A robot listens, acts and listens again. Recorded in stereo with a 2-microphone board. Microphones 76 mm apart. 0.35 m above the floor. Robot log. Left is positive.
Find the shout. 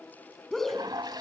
cmd yaw +30
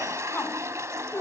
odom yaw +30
note: So it is at 145° left.
cmd yaw +145
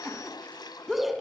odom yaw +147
end: Facing the shout.